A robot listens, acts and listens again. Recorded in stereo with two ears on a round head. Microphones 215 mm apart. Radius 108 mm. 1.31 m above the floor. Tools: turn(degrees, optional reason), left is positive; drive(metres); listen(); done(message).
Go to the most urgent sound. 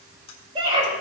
turn(degrees=-25, reason="The scream: about 25° right or 155° right.")
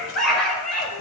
drive(metres=1.0)
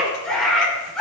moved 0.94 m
drive(metres=1.0)
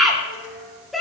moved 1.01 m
drive(metres=1.0)
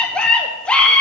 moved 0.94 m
drive(metres=1.0)
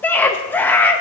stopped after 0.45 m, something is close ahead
turn(degrees=10, reason="The scream is now 10° left.")
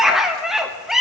done("I am next to the scream.")